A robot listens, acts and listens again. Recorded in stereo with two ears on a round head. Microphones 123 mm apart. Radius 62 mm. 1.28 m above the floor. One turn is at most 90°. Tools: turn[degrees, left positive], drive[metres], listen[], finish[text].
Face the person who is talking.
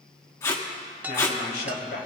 Thought: The man speaking: about 75° left or 105° left.
Action: turn[75]
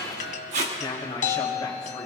Thought: So it is at 30° left.
Action: turn[30]
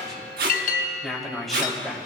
Action: finish[Facing the man speaking.]